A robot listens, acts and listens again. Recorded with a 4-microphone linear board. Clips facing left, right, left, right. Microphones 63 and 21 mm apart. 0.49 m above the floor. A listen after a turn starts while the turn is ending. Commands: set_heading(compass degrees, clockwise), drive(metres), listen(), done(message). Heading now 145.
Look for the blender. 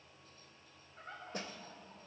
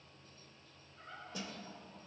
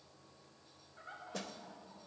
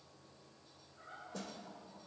listen()
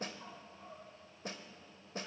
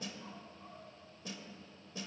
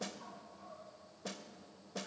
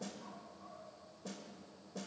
listen()
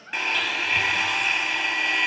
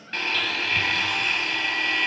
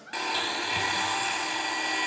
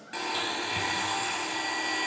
set_heading(115)
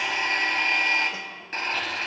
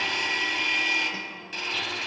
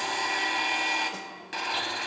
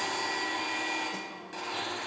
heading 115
set_heading(340)
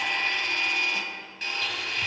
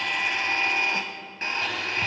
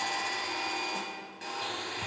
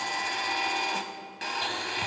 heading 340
set_heading(15)
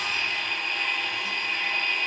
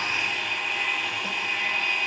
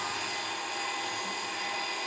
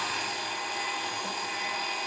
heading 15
done("Found it: a blender, straight ahead.")